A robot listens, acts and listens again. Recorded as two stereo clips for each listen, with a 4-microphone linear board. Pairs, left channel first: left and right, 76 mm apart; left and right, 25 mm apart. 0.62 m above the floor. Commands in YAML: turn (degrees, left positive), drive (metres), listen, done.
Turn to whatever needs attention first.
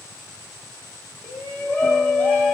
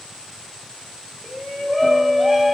turn: 20
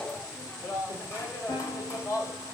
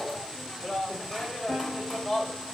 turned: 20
turn: 140
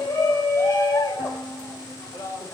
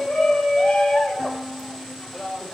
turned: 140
turn: 35
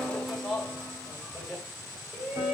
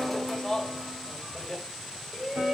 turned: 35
done: "Found it: a shout, straight ahead."